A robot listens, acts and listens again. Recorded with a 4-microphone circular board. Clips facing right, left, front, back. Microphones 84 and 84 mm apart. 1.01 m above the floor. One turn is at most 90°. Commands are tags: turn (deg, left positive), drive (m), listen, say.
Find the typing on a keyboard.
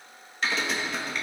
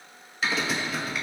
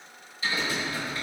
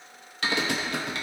<turn deg="90"/>
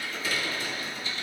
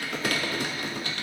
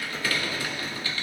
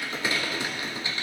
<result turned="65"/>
<turn deg="90"/>
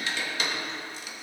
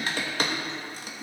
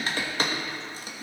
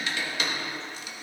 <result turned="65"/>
<turn deg="45"/>
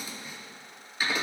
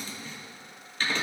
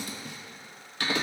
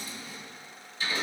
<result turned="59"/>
<turn deg="-10"/>
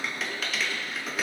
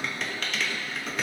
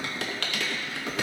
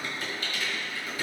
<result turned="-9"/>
<say>Found it: typing on a keyboard, straight ahead, 1 to 2 m away.</say>